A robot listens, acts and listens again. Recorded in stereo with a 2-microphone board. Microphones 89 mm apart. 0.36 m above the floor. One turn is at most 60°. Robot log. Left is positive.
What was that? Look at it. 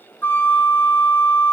note: The flute: about 20° left or 160° left.
cmd yaw +20
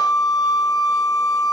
note: So it is at 135° left.
cmd yaw +60
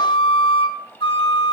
note: The flute is now 90° left.
cmd yaw +60
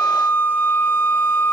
note: The flute is now 20° left.
cmd yaw +20
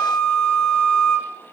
end: Found it: a flute, straight ahead, under 1 m away.